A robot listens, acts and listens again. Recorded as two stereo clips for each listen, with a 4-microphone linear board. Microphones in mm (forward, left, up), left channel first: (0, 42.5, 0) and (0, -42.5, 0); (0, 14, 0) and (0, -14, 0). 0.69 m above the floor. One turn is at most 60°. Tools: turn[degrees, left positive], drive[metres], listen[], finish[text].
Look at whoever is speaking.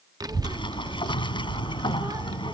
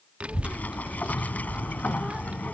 Thought: The child speaking: about 50° right or 130° right.
Action: turn[-50]
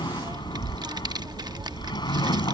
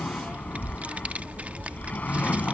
Thought: So it is at 70° right.
Action: turn[-60]
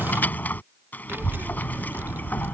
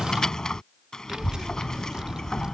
Thought: The child speaking is now 30° right.
Action: turn[-30]
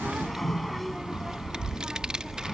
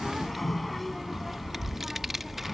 Thought: The child speaking is now 10° right.
Action: turn[-10]
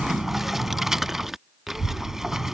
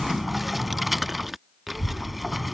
Action: finish[Found it: a child speaking, straight ahead.]